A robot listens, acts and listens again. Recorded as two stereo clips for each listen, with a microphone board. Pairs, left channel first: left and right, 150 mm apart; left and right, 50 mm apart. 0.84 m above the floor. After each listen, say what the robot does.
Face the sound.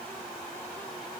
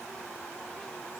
Keep listening.
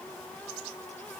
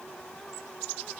Keep listening.
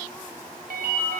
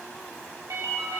Turn 90° right.
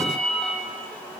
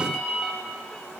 Found it: a ringtone, straight ahead, 1 to 2 m away.